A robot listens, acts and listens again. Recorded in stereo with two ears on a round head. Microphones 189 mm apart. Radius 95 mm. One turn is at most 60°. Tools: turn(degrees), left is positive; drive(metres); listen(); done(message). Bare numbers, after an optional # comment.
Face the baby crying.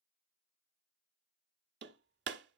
listen()
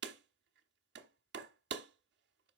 listen()
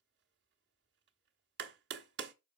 done("I can't make out a baby crying, only hammering.")